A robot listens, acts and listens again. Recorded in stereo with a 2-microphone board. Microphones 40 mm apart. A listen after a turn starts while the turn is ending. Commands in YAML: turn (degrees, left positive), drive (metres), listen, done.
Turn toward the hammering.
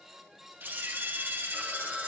listen: true
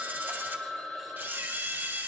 listen: true
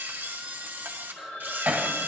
turn: -35
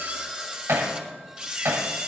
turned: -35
turn: -110
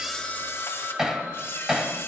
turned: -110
turn: -15
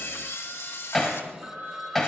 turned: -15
done: "Found it: hammering, straight ahead, 2 to 4 m away."